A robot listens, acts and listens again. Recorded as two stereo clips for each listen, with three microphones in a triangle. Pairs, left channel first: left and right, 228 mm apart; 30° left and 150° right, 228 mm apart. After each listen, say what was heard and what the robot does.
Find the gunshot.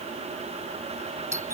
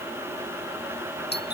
Keep listening.
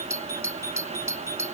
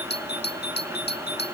Keep listening.
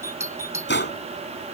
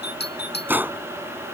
The gunshot: 130° left. Turn 130° left.
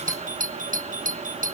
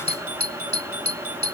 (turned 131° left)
Facing where the gunshot came from. I can't hear it now.